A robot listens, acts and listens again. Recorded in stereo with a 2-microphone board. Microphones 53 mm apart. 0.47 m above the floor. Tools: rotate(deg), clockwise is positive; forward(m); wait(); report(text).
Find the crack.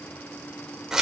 wait()
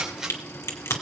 rotate(-70)
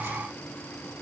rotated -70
wait()
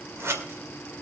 report("I heard a crack, but can't make it out now. It was about straight ahead or 40° left.")